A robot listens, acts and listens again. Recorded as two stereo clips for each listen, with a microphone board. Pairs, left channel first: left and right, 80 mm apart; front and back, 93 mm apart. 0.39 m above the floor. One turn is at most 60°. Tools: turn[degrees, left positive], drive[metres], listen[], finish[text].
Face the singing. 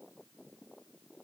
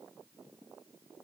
Action: listen[]
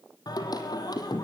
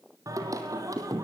Thought: The singing: 125° left.
Action: turn[60]
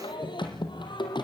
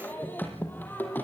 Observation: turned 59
Thought: The singing is now 70° left.
Action: turn[60]
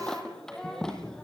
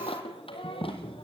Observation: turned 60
Action: finish[Facing the singing.]